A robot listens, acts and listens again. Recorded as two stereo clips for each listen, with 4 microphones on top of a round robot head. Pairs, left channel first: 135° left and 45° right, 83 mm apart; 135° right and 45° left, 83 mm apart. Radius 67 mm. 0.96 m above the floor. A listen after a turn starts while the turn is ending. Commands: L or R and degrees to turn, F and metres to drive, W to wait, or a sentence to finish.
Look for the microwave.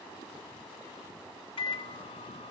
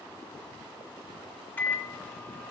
L155
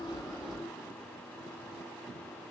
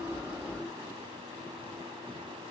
W
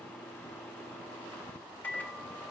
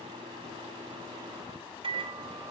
L60
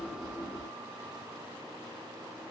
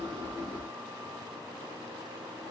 W
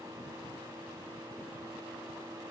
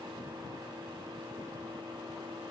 L10
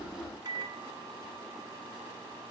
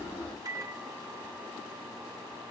Facing the microwave, 1 to 2 m away.